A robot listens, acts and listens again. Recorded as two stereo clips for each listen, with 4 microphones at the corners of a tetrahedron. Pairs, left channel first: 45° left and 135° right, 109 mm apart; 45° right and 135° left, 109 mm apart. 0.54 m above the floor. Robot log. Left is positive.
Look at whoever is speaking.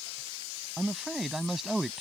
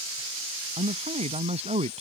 note: The man speaking: 135° left.
cmd yaw +135
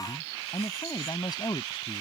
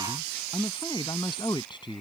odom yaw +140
end: Found it: a man speaking, straight ahead.